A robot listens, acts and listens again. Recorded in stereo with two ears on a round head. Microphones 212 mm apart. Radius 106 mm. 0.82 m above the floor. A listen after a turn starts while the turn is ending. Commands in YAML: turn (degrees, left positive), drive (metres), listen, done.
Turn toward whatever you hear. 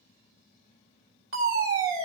turn: -60
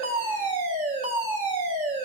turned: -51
turn: -35
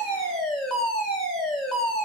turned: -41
done: "Facing the fire alarm."